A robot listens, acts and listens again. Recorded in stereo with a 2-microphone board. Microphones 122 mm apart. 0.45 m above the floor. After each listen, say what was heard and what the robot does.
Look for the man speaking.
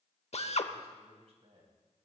The man speaking: about 60° right or 120° right. Turn 60° right.
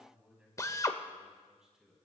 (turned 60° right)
Facing the man speaking, over 4 m away.